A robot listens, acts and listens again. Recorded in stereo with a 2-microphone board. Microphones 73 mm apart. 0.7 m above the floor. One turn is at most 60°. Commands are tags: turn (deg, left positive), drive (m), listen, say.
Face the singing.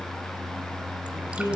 <turn deg="60"/>
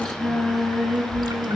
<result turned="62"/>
<say>Facing the singing, 2 to 4 m away.</say>